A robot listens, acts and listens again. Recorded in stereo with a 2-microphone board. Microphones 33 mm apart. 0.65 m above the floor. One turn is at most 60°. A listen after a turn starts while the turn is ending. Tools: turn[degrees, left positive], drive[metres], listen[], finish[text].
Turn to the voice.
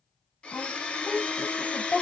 Thought: The woman speaking: about 65° left or 115° left.
Action: turn[60]
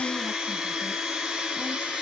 Action: listen[]
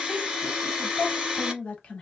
Thought: So it is at 45° left.
Action: turn[45]
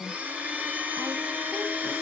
Action: listen[]
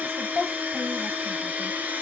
Action: finish[Found it: a woman speaking, straight ahead, 1 to 2 m away.]